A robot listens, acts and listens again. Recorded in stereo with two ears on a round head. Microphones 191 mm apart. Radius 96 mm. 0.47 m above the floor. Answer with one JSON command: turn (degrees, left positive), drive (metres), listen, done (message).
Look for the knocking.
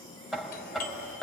{"turn": 30}
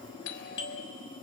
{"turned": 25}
{"listen": true}
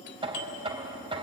{"turn": -30}
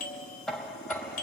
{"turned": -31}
{"done": "Facing the knocking."}